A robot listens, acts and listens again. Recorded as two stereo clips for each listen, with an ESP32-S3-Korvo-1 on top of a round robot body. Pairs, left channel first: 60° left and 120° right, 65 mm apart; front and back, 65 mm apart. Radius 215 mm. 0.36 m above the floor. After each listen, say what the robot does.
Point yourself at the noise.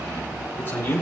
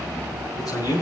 Facing the man speaking.